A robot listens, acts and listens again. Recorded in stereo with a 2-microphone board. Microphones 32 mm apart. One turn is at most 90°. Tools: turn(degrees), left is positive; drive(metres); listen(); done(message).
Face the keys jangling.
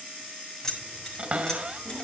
turn(degrees=15)
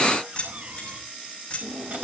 turn(degrees=35)
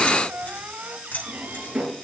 turn(degrees=90)
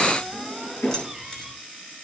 turn(degrees=15)
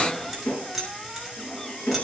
done("Found it: keys jangling, straight ahead.")